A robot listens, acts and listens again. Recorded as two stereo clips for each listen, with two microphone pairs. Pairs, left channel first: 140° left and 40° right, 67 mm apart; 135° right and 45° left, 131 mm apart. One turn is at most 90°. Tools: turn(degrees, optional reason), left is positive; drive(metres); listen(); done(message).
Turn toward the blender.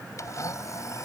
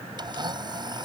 turn(degrees=90, reason="The blender: 100° left.")
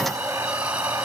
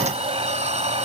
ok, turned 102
listen()
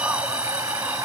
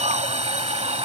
listen()
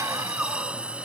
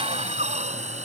done("Facing where the blender came from. I can't hear it now.")